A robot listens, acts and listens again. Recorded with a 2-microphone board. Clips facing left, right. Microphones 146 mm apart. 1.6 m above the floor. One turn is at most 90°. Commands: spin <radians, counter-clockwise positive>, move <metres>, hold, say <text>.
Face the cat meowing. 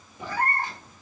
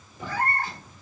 spin 0.26
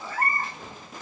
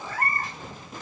spin 1.57
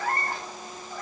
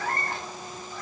spin 0.96
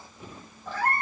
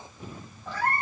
say Facing the cat meowing, 1 to 2 m away.